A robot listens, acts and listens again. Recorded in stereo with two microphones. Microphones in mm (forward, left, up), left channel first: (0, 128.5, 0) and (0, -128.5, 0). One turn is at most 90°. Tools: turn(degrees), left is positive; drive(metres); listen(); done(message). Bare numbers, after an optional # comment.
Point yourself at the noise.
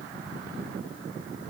listen()
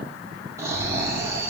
turn(-30)
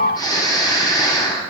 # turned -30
# So it is at 15° left.
turn(15)
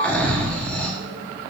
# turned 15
done("Facing the snoring.")